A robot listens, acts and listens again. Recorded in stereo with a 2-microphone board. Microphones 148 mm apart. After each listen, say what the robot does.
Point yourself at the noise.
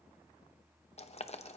Turn 45° left.
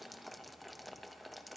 Facing the boiling, under 1 m away.